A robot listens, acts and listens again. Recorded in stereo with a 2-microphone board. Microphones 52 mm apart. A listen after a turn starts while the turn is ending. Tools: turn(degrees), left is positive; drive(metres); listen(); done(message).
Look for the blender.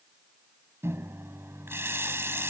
listen()
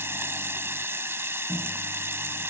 listen()
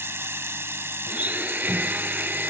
turn(degrees=-30)
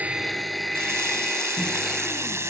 done("Facing the blender.")